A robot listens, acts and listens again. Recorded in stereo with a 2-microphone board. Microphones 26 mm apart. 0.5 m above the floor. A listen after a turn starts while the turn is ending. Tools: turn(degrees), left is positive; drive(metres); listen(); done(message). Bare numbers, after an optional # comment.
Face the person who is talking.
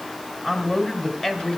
# The man speaking: about 20° left or 160° left.
turn(20)
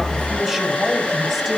listen()
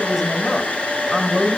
done("Found it: a man speaking, straight ahead, 2 to 4 m away.")